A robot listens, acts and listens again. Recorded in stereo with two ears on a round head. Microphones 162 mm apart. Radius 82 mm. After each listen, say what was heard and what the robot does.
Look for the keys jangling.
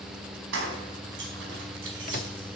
Turn 90° right.
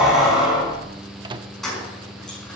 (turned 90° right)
Facing the keys jangling.